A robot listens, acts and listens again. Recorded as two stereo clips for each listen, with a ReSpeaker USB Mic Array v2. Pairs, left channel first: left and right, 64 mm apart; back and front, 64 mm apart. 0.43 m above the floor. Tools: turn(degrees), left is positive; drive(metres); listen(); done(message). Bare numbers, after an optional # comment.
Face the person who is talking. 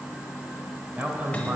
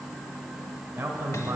# The man speaking: 35° right.
turn(-35)
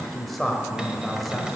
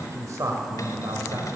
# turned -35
done("Facing the man speaking.")